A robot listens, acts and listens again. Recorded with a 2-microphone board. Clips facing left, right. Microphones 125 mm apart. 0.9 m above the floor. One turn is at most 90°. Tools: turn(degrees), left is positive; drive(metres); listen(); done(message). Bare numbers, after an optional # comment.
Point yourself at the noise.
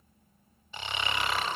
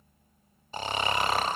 # The snoring: about 40° right or 140° right.
turn(-40)
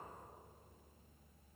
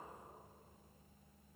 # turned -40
listen()
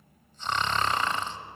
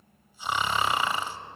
# So it is at 10° right.
turn(-10)
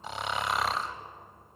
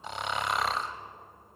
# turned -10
done("Facing the snoring.")